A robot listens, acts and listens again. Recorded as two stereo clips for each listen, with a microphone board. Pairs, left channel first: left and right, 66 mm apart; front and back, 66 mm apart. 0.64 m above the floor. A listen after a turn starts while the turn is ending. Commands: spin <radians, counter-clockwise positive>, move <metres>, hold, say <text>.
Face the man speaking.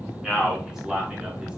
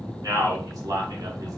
spin -2.97
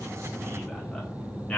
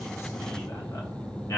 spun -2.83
spin 0.35
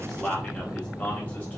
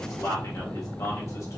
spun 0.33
spin 0.35
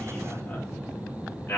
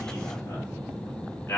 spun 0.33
spin 0.61
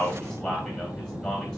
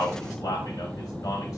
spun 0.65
say Facing the man speaking, 1 to 2 m away.